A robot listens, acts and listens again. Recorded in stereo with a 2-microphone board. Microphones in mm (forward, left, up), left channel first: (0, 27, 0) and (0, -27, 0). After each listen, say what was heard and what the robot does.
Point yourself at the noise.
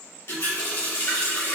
The running tap: about 55° left or 125° left. Turn 55° left.
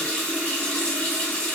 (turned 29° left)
So it is at 25° left. Turn 25° left.
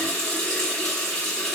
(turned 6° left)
The running tap is now 20° left. Turn 20° left.
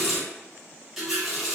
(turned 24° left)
Facing the running tap, 1 to 2 m away.